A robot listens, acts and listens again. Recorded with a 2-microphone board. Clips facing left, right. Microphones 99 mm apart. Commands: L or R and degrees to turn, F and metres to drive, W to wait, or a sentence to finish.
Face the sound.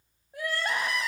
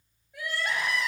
L40
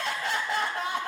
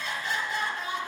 L100
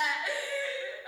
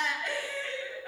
L10
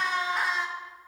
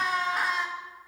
Found it: crying, straight ahead, under 1 m away.